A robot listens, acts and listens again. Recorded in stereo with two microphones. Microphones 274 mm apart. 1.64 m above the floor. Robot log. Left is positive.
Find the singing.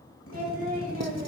note: The singing: about 30° right or 150° right.
cmd yaw -30
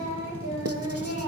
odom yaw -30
note: So it is at 120° right.
cmd yaw -120
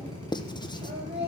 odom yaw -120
note: The singing is now 40° right.
cmd yaw -40
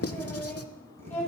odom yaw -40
end: Facing the singing, over 4 m away.